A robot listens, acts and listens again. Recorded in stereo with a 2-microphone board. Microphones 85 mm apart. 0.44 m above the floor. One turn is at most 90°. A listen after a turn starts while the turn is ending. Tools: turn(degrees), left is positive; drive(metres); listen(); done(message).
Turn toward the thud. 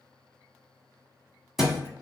turn(degrees=30)
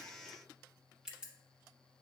listen()
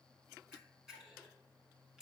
done("I heard a thud, but can't make it out now. It was about 30° right or 150° left.")